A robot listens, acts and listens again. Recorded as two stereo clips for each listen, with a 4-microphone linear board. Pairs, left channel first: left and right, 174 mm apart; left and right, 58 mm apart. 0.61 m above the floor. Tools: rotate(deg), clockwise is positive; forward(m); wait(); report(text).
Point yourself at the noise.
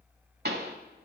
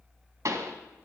rotate(70)
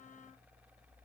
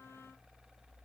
wait()
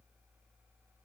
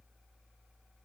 report("I heard a pop, but can't make it out now. It was about straight ahead or 40° right.")